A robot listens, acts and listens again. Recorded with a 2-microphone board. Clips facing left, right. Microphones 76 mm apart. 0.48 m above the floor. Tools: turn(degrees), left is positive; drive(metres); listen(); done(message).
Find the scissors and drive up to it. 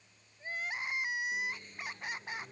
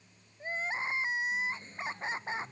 listen()
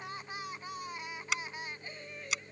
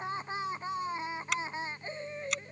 turn(degrees=30)
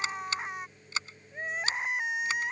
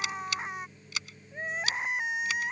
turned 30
turn(degrees=150)
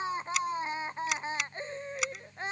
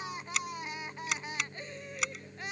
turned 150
drive(metres=1.0)
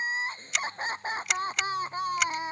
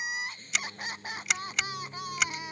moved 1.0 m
drive(metres=1.0)
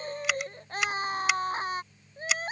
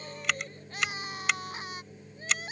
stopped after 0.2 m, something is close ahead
done("I am next to the scissors.")